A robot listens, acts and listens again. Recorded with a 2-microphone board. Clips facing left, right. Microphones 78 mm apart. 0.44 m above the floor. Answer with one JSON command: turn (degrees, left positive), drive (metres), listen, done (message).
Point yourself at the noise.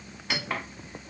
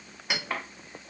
{"turn": -30}
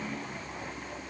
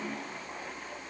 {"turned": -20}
{"listen": true}
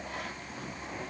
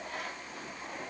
{"listen": true}
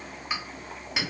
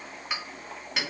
{"done": "Found it: a clink, straight ahead."}